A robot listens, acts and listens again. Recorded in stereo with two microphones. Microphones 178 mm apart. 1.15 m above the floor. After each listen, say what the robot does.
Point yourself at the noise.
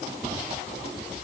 Keep listening.
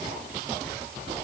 Keep listening.
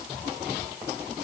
I can't make out anything to turn to.